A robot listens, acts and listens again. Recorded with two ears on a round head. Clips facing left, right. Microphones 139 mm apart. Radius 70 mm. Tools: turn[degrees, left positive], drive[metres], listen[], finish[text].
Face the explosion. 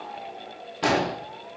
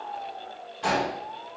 Thought: The explosion: about 70° left or 110° left.
Action: turn[70]
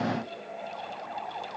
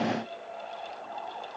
Action: listen[]
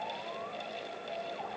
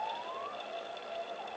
Action: finish[I heard an explosion, but can't make it out now. It was about straight ahead or 40° left.]